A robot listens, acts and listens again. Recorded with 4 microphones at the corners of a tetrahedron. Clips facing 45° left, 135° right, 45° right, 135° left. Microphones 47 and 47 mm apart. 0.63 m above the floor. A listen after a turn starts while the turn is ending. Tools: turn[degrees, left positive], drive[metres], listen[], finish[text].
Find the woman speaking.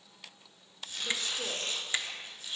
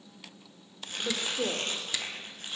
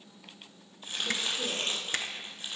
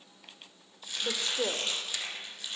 Thought: The woman speaking: 145° left.
Action: turn[145]
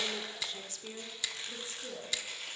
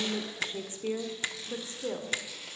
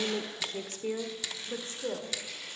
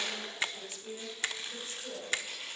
Thought: The woman speaking is now 90° right.
Action: turn[-90]
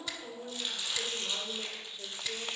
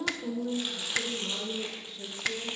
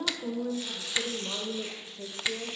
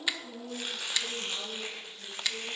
Thought: The woman speaking is now 30° right.
Action: turn[-30]
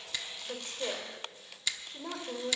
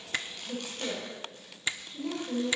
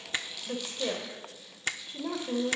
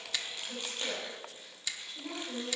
Action: finish[Found it: a woman speaking, straight ahead, 2 to 4 m away.]